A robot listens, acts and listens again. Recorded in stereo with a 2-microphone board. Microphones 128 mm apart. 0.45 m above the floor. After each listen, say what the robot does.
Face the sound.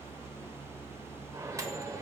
Turn 25° right.
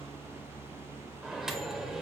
Facing the microwave, 1 to 2 m away.